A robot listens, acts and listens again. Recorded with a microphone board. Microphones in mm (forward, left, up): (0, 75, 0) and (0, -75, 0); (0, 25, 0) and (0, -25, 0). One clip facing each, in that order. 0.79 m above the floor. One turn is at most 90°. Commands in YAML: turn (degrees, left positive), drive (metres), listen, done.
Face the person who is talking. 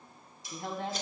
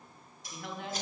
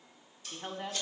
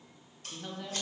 turn: 35
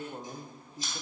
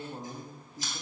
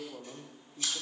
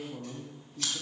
done: "Facing the woman speaking."